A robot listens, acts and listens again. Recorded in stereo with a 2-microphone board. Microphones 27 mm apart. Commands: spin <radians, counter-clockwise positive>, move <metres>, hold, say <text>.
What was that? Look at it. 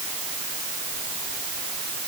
hold
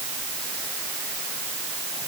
hold
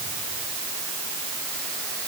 say I can't make out anything.